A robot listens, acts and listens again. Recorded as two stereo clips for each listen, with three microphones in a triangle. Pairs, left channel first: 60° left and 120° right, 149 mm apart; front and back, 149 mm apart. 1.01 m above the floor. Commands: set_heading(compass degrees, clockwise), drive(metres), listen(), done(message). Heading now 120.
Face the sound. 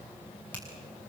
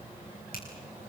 set_heading(140)
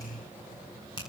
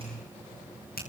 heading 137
done("Facing the finger snap, over 4 m away.")